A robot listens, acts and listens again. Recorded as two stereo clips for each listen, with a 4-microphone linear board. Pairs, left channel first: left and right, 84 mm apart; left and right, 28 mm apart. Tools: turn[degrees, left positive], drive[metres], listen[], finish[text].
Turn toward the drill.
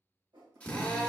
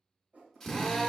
Action: turn[30]
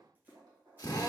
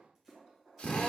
Thought: So it is at 135° left.
Action: turn[135]
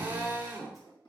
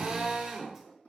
Thought: The drill is now 25° right.
Action: turn[-25]
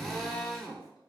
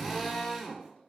Action: finish[Found it: a drill, straight ahead.]